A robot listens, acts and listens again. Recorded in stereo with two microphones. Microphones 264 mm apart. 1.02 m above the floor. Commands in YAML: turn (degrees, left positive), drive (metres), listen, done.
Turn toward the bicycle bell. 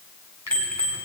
turn: 30
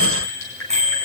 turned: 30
turn: -25
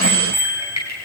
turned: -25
turn: 10
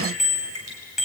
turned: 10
done: "Facing the bicycle bell, over 4 m away."